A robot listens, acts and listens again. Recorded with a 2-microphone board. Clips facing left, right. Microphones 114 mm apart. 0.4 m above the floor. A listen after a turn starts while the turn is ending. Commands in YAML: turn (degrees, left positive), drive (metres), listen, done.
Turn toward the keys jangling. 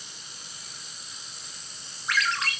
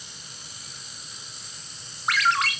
listen: true
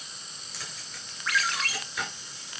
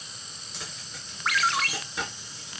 turn: -25
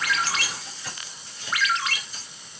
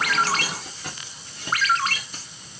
turn: -120
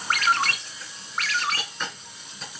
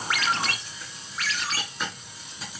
done: "Facing the keys jangling, 2 to 4 m away."